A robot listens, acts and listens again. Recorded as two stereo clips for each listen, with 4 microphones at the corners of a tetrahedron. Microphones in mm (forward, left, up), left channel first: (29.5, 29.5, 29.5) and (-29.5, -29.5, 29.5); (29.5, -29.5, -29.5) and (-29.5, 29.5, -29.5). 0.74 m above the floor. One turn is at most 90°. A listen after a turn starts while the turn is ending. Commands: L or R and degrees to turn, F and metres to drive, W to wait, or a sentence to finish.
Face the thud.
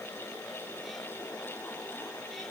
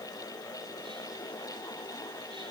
W
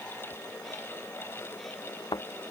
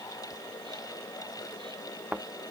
L65
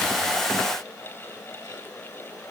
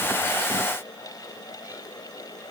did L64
I heard a thud from this way, but can't make it out now.